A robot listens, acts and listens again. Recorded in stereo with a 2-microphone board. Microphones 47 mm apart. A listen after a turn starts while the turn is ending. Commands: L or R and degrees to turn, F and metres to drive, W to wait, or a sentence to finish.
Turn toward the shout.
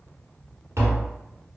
W
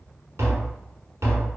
W
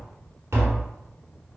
I can't make out a shout, only tapping.